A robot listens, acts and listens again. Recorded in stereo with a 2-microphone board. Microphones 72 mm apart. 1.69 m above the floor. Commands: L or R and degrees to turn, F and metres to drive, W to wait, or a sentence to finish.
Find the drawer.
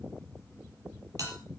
W
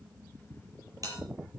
W
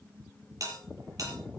I can't make out a drawer to turn to.